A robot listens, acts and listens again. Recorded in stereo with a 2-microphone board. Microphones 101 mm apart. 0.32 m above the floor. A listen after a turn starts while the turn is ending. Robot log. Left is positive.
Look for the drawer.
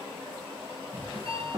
note: The drawer: about 35° right or 145° right.
cmd yaw -35
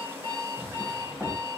end: Facing the drawer, over 4 m away.